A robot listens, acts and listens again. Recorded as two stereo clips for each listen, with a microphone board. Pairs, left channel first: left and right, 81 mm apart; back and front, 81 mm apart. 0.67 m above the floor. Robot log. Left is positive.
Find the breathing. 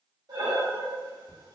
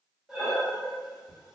note: The breathing: 80° right.
cmd yaw -80
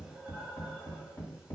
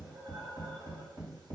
cmd idle
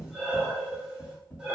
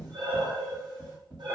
note: The breathing is now 15° right.
cmd yaw -15
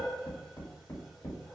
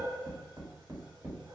end: Facing the breathing.